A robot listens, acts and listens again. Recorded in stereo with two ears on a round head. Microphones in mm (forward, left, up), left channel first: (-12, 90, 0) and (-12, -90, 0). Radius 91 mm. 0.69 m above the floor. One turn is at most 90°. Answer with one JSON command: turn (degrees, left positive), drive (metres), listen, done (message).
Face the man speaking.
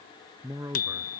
{"turn": -30}
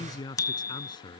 {"turn": 25}
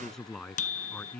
{"done": "Facing the man speaking."}